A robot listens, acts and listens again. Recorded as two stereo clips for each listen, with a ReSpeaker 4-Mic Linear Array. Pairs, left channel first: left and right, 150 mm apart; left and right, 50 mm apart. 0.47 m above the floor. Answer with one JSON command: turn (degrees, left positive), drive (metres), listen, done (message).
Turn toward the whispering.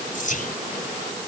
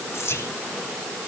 {"turn": 60}
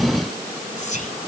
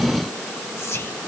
{"turn": 60}
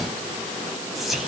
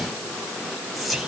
{"done": "Found it: whispering, straight ahead, 2 to 4 m away."}